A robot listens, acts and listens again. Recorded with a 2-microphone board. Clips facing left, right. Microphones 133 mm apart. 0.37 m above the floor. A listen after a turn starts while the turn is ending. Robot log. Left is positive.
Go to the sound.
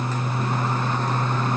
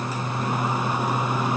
cmd idle
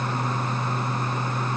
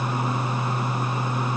cmd idle
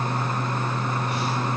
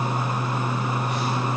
end: I can't make out anything to turn to.